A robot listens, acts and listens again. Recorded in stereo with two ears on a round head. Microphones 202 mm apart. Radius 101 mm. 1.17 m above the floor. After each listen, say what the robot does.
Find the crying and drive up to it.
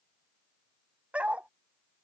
Keep listening.
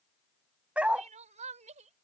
Turn 35° right.
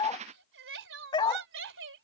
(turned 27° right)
Turn 120° right.
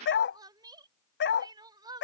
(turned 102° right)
Turn 20° right.
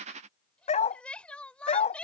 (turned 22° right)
Drive 1.0 m forward.
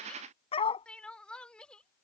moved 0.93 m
Drive 1.0 m forward.
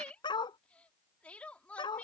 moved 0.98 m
Drive 1.0 m forward.
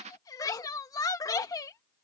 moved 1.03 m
Turn 15° left.
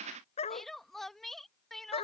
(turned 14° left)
Drive 1.0 m forward.
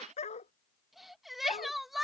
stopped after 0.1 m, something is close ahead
I am next to the crying.